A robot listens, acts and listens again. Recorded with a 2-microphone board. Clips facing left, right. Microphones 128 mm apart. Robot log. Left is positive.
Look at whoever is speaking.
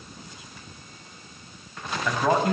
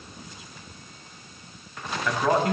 cmd yaw +30
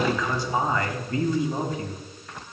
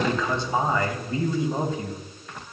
note: So it is at 25° right.
cmd yaw -25
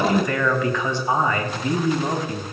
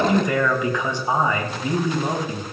note: The man speaking is now 15° right.
cmd yaw -15
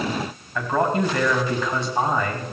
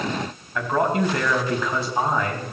end: Found it: a man speaking, straight ahead.